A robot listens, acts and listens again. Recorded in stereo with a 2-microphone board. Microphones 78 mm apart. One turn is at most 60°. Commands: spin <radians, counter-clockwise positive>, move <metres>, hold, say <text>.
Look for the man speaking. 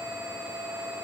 hold
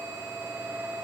hold
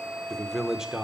spin -0.52
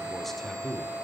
spin 0.52
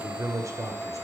spin -0.79
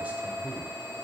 hold
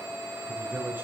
spin -0.35
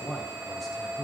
say Facing the man speaking.